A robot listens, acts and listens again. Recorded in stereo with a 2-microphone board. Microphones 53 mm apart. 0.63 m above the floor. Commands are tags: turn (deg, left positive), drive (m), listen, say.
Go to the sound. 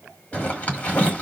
<turn deg="25"/>
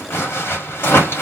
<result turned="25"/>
<turn deg="125"/>
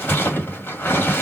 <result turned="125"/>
<turn deg="45"/>
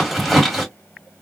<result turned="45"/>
<drive m="1.0"/>
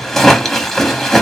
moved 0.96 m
<turn deg="10"/>
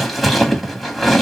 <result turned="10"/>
<drive m="1.0"/>
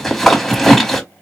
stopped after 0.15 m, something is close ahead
<say>I am next to the zipper.</say>